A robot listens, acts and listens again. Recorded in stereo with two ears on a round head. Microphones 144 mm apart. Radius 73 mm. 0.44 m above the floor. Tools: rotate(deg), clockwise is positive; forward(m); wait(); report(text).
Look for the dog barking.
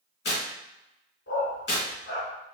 rotate(-90)
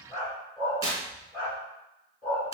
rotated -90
report("Facing the dog barking, 2 to 4 m away.")